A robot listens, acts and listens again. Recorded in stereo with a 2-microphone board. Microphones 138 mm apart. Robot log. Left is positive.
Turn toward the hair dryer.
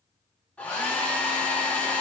cmd yaw +30
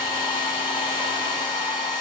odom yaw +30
note: So it is at 140° left.
cmd yaw +140
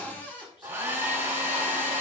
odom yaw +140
note: The hair dryer is now 15° right.
cmd yaw -15
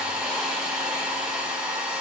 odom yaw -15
note: The hair dryer is now 10° right.
cmd yaw -10
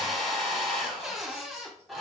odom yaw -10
end: Facing the hair dryer, 1 to 2 m away.